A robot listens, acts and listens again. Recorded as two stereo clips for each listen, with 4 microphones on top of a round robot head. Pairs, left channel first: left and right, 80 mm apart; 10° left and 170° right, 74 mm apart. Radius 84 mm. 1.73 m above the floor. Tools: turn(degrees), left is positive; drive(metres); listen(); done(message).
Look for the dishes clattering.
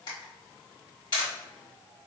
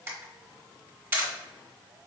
listen()
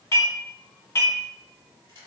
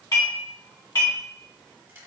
turn(degrees=40)
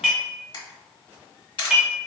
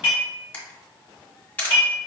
turn(degrees=-10)
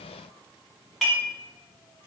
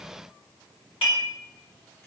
done("Found it: dishes clattering, straight ahead.")